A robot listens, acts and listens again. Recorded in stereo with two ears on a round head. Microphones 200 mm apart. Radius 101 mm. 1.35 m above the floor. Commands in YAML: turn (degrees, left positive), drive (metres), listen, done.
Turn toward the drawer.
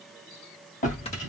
turn: 40
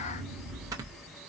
turn: 95
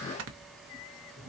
turn: 55
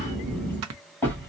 turn: 10
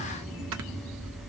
done: "Facing the drawer, 2 to 4 m away."